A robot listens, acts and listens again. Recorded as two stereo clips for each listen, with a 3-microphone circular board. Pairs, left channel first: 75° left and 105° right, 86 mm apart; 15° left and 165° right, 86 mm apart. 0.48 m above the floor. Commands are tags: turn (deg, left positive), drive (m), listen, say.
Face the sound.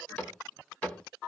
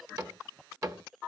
<turn deg="145"/>
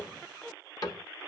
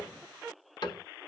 <turn deg="40"/>
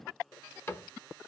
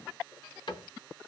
<turn deg="15"/>
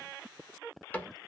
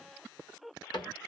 <say>Facing the cupboard door, 1 to 2 m away.</say>